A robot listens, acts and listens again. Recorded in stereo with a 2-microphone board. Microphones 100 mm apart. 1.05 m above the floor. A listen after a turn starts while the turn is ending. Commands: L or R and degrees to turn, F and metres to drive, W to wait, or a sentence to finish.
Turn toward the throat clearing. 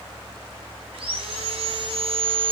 W
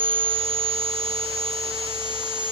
W
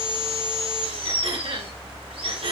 R75
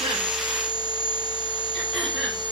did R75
W
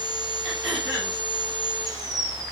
Found it: throat clearing, straight ahead.